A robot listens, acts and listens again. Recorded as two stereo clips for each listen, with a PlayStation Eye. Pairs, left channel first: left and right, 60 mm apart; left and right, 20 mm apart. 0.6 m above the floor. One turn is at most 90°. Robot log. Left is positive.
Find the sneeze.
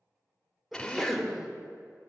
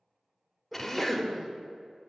cmd yaw +30
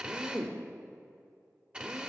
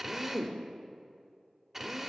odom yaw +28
cmd idle
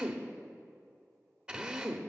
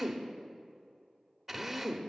end: I heard a sneeze, but can't make it out now. It was about 30° right or 155° left.